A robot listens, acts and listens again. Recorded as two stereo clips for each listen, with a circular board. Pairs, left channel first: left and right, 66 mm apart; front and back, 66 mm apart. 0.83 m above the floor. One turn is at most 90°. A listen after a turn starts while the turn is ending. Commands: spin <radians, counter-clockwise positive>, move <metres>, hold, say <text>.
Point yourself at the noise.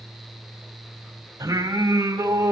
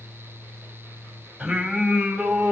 spin -1.57
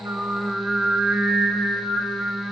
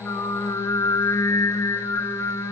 spin 0.35
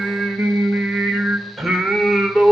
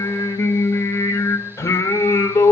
say Found it: singing, straight ahead.